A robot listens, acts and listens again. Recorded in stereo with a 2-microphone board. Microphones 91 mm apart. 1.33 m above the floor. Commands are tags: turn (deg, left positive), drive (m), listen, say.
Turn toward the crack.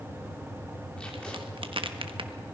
<turn deg="-75"/>
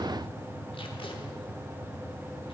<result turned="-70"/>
<listen/>
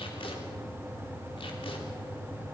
<say>I heard a crack, but can't make it out now. It was about 5° right or 35° right.</say>